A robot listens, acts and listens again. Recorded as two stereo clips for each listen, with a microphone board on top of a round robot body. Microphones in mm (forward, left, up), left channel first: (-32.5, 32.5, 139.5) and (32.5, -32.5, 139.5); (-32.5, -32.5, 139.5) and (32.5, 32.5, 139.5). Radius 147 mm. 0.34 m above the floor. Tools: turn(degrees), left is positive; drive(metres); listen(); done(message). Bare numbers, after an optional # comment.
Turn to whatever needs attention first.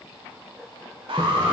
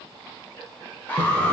# The alarm: 60° right.
turn(-60)
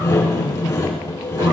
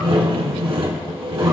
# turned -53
# Nothing new. It was at 10° right.
turn(-10)
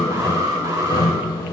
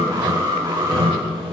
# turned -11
done("Facing the alarm.")